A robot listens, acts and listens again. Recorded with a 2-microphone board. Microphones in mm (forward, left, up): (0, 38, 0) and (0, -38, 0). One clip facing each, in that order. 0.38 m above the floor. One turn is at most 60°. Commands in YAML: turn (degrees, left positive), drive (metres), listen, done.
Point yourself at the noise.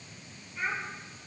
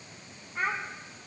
turn: -55
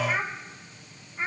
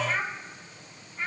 turn: 25
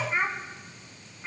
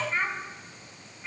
turn: 25
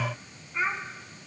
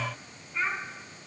turn: 15
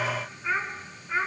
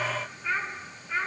turn: 15
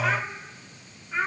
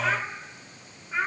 done: "Found it: a child speaking, straight ahead, 2 to 4 m away."